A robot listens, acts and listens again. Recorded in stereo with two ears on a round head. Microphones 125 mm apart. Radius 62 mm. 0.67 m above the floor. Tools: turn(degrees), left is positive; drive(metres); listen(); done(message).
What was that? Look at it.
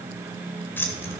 turn(degrees=20)
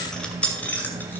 turn(degrees=30)
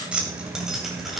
done("Facing the keys jangling.")